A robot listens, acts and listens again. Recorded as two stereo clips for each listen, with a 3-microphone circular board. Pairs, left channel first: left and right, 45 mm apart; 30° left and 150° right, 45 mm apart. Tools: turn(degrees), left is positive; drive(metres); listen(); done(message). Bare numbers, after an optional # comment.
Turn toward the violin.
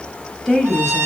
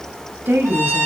# The violin: 115° right.
turn(-115)
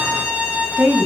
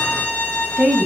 # The violin is now 30° right.
turn(-30)
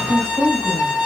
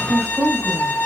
# The violin is now 10° right.
turn(-10)
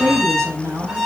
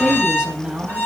done("Facing the violin.")